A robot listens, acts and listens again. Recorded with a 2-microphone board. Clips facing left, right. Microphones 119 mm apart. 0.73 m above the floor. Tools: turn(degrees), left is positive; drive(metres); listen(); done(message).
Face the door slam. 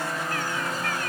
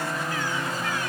listen()
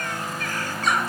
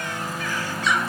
listen()
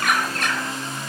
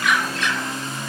done("I can't make out a door slam, only a bird.")